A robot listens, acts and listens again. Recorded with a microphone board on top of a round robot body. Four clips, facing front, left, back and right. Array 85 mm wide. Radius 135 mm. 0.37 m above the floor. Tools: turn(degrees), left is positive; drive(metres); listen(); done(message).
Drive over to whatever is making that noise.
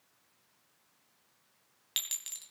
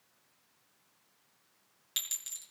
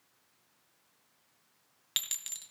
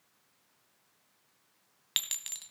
turn(degrees=-95)
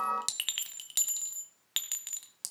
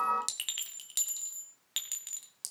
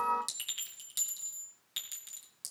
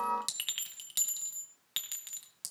turn(degrees=-10)
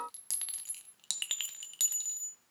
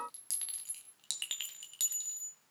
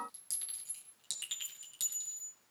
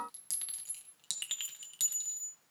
drive(metres=1.0)
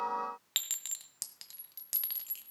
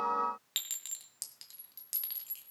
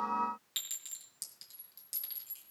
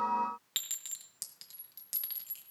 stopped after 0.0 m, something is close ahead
done("Blocked. The clink is further on, straight ahead.")